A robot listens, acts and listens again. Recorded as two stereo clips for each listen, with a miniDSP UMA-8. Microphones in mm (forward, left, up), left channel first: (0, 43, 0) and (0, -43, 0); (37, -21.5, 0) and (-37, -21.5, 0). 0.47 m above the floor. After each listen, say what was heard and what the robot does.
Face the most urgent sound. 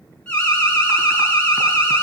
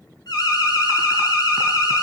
The alarm: 15° left. Turn 15° left.
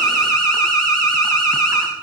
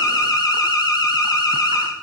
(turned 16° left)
Facing the alarm, over 4 m away.